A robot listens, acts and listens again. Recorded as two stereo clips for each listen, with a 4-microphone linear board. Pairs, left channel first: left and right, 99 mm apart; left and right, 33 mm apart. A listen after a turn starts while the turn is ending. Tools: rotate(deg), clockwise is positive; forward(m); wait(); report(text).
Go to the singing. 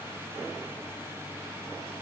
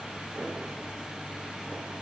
wait()
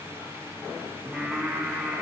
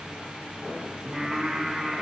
rotate(-30)
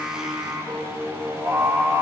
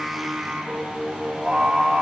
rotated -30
rotate(30)
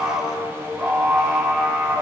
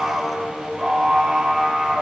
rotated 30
forward(1.0)
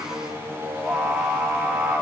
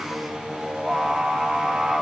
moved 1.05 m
forward(1.0)
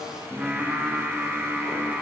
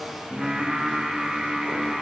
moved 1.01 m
rotate(10)
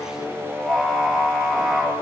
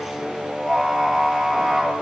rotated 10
forward(1.0)
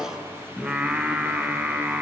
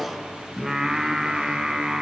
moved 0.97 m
rotate(15)
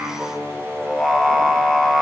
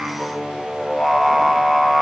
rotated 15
forward(1.0)
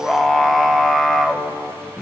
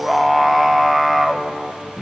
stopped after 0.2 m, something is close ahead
report("I am next to the singing.")